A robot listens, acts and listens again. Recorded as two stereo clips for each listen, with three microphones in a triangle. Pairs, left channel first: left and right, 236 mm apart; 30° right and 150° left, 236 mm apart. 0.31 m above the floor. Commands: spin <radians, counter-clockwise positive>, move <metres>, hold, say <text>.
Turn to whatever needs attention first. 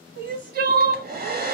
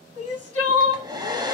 spin -0.79
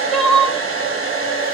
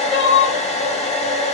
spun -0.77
say Found it: crying, straight ahead, 1 to 2 m away.